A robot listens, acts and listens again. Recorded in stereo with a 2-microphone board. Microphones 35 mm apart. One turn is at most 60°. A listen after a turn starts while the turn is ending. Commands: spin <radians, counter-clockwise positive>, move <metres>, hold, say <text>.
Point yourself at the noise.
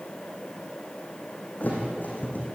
spin 0.96
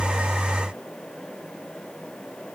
hold
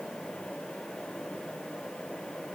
say I heard a thud, but can't make it out now. It was about straight ahead or 70° left.